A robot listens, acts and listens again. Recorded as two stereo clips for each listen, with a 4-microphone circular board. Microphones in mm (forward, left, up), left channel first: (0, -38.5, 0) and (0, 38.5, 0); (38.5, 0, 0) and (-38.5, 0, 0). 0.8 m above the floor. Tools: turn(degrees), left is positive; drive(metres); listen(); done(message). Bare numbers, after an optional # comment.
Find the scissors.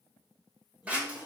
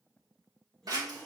# The scissors: 160° left.
turn(160)
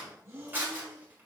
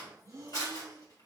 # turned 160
# The scissors is now 25° left.
turn(25)
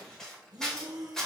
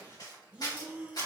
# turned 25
# The scissors is now 10° right.
turn(-10)
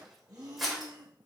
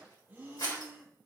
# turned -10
done("Facing the scissors, 1 to 2 m away.")